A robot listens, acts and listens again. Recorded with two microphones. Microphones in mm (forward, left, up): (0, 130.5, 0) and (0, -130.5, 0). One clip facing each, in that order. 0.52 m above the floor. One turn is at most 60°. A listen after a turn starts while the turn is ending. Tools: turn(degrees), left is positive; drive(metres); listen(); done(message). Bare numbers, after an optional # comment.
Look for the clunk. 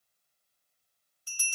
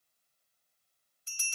listen()
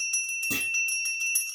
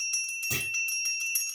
# The clunk: about 45° left or 135° left.
turn(45)
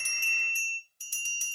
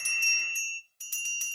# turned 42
listen()
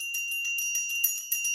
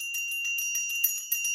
done("I heard a clunk, but can't make it out now. It was about straight ahead or 95° left.")